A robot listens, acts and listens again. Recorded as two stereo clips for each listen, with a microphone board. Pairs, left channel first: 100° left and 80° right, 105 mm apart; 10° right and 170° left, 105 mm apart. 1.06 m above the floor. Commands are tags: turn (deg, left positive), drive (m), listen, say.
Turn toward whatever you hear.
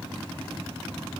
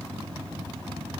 <listen/>
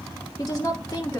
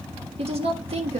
<turn deg="160"/>
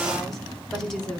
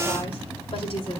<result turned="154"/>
<turn deg="15"/>
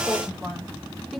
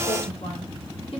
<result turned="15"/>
<listen/>
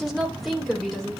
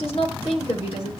<turn deg="10"/>
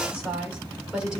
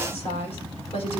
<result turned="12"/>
<say>Facing the woman speaking.</say>